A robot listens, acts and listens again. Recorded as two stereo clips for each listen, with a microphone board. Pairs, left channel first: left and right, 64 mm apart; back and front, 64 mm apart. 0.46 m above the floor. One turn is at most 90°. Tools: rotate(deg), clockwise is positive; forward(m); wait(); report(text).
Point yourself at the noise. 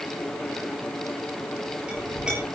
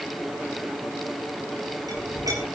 rotate(15)
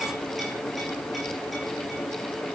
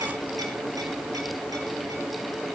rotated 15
wait()
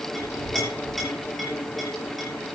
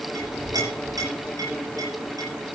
report("Facing the clink.")